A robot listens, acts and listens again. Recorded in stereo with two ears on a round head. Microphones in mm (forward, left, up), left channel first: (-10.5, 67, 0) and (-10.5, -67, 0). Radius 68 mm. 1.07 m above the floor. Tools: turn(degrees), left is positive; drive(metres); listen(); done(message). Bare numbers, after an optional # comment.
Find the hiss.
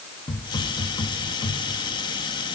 # The hiss: about 35° left or 145° left.
turn(35)
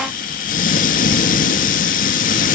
# So it is at 115° left.
turn(115)
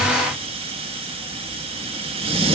# The hiss is now 40° right.
turn(-40)
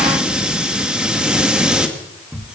done("Facing the hiss.")